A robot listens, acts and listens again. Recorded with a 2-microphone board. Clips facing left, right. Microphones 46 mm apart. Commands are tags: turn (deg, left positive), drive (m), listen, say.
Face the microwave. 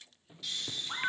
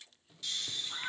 <turn deg="25"/>
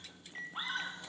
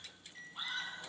<turn deg="130"/>
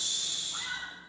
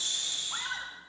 <listen/>
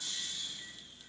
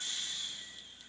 <listen/>
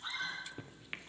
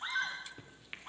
<turn deg="15"/>
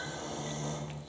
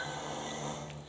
<listen/>
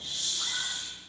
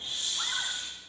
<listen/>
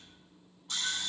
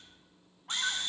<say>Facing where the microwave came from. I can't hear it now.</say>